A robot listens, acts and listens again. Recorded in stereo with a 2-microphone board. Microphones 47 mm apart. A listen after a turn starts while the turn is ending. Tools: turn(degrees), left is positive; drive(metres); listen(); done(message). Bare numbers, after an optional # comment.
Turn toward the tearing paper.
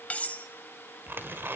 # The tearing paper: about 50° right or 130° right.
turn(-50)
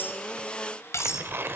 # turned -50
# So it is at 65° right.
turn(-65)
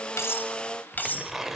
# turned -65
# The tearing paper is now 10° right.
turn(-10)
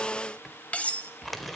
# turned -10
done("Found it: tearing paper, straight ahead, 1 to 2 m away.")